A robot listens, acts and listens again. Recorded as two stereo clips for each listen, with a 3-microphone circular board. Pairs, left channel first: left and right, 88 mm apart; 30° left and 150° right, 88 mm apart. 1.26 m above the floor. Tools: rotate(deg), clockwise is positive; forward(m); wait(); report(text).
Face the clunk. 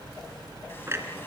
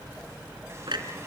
rotate(145)
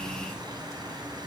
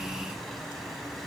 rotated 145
report("Facing where the clunk came from. I can't hear it now.")